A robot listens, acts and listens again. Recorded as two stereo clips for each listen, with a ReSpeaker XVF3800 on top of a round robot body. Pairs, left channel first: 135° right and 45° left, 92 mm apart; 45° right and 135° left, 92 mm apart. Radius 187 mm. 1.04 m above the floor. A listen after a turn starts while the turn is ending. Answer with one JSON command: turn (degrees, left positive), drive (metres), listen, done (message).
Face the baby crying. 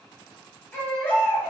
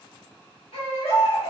{"turn": -65}
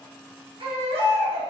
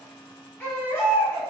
{"turn": 25}
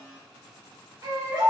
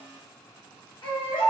{"done": "Facing the baby crying, 1 to 2 m away."}